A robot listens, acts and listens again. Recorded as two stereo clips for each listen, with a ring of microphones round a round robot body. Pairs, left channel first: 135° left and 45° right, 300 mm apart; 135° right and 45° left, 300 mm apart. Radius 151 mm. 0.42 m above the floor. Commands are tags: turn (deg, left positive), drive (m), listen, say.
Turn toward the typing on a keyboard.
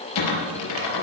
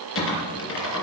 <turn deg="175"/>
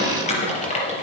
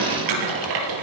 <turn deg="65"/>
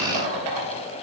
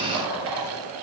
<say>Facing the typing on a keyboard, 2 to 4 m away.</say>